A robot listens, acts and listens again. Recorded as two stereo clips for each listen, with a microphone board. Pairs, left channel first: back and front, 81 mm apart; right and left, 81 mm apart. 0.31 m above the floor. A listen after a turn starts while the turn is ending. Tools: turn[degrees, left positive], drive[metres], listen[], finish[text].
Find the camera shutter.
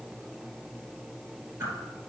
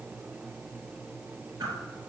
Action: listen[]
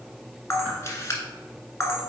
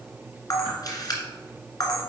Thought: The camera shutter: 125° right.
Action: turn[-125]
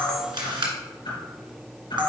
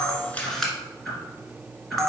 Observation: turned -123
Action: finish[Found it: a camera shutter, straight ahead.]